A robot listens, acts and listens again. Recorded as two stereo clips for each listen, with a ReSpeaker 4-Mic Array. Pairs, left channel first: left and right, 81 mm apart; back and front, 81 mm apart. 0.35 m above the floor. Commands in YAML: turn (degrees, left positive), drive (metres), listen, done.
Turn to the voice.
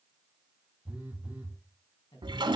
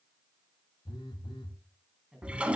turn: 85
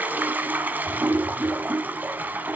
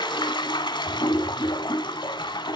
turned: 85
listen: true
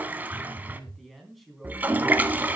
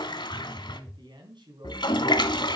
done: "Facing the man speaking, 2 to 4 m away."